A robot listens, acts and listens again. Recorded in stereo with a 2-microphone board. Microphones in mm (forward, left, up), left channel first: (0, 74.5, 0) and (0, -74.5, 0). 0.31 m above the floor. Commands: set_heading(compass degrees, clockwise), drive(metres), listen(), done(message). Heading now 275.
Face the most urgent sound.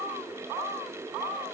listen()
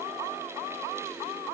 listen()
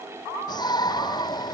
set_heading(250)
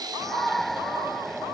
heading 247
done("Found it: a shout, straight ahead.")